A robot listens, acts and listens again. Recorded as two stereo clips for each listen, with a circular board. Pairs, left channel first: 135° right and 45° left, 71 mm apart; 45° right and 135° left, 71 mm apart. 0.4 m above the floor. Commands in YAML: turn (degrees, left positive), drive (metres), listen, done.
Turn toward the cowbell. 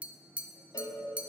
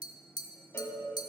turn: -105
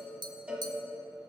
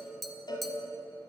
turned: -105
turn: -35
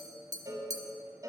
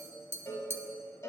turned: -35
done: "Facing the cowbell, 1 to 2 m away."